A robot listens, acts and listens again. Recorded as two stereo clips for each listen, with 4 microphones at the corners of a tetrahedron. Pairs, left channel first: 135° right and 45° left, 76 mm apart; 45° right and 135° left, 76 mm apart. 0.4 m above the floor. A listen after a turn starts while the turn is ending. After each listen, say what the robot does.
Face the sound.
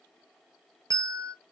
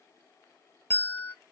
Turn 10° left.
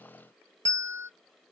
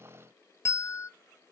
Found it: a bell, straight ahead.